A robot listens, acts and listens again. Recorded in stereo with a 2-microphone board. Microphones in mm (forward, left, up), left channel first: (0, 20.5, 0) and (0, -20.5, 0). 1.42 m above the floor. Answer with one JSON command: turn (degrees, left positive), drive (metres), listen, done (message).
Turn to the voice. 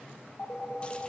{"listen": true}
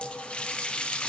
{"listen": true}
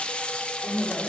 {"turn": 90}
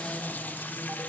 {"listen": true}
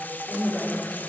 {"done": "Found it: a woman speaking, straight ahead, over 4 m away."}